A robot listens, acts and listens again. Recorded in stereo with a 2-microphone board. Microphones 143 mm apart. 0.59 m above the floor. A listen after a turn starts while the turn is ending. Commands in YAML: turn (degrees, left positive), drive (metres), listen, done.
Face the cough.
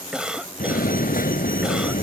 turn: -30
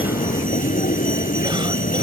listen: true
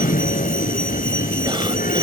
listen: true
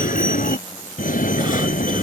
done: "I heard a cough, but can't make it out now. It was about 25° left or 145° right."